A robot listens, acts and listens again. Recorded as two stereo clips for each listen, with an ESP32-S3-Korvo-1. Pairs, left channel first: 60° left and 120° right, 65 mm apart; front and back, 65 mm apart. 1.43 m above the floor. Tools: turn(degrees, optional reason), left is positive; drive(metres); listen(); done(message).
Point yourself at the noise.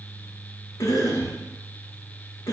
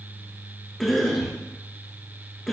turn(degrees=85, reason="The cough: 85° left.")
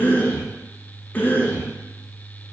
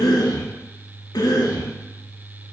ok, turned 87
done("Facing the cough.")